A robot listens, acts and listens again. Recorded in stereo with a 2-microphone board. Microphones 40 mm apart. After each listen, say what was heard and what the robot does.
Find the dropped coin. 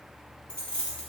The dropped coin: about 20° left or 160° left. Turn 20° left.
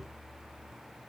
Keep listening.
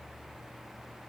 I heard a dropped coin, but can't make it out now. It was about straight ahead or 140° left.